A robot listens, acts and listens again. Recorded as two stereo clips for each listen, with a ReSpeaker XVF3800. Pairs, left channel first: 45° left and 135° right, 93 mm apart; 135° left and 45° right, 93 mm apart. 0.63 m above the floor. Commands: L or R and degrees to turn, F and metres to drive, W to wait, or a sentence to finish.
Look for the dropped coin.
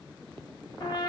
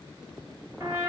W
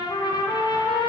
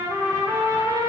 W
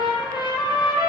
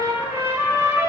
I can't make out a dropped coin, only a trumpet.